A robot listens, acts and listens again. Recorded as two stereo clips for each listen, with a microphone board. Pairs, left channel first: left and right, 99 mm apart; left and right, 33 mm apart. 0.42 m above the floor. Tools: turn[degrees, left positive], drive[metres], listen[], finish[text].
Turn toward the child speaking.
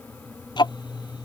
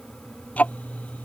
Action: listen[]
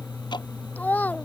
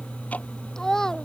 Thought: The child speaking: about 15° left or 165° left.
Action: turn[15]
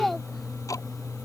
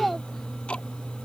Action: turn[30]
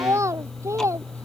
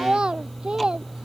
Thought: So it is at 30° right.
Action: turn[-30]
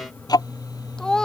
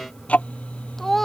Action: finish[Facing the child speaking.]